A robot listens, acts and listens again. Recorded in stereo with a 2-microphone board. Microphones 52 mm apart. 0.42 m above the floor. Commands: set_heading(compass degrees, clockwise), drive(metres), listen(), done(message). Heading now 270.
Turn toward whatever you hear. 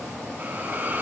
set_heading(305)
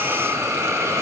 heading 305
set_heading(55)
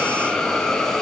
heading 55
set_heading(45)
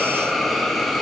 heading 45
done("Facing the hiss.")